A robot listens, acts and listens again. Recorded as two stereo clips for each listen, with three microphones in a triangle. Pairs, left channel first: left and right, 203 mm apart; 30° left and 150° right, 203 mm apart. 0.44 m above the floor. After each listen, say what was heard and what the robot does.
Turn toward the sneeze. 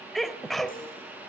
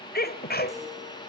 Facing the sneeze.